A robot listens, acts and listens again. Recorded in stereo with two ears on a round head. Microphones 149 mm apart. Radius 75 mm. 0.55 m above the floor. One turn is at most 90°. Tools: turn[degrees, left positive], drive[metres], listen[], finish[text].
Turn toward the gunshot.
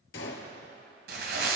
Thought: The gunshot: about 75° left or 105° left.
Action: turn[75]
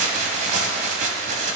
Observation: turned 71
Action: listen[]
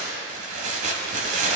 Action: finish[I heard a gunshot, but can't make it out now. It was about 5° left or 35° left.]